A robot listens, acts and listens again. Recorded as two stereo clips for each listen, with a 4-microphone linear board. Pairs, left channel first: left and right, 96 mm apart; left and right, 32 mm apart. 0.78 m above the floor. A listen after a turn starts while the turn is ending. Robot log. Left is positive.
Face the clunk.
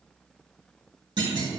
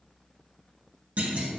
note: The clunk: about 50° right or 130° right.
cmd yaw -50
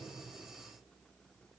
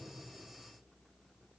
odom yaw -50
cmd idle
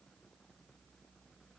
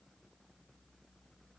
end: I heard a clunk, but can't make it out now. It was about straight ahead or 80° right.